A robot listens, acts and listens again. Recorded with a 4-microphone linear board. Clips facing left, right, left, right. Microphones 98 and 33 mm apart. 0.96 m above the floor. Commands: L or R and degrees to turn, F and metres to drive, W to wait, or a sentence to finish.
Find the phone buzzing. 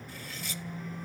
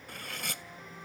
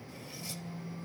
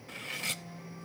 L30
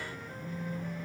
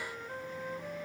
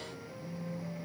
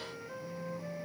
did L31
Found it: a phone buzzing, straight ahead.